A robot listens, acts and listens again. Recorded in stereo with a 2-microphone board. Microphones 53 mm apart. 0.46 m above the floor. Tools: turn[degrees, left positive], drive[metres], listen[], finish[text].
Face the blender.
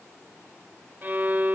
Action: listen[]
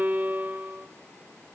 Action: listen[]
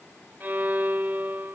Action: finish[I can't make out a blender to turn to.]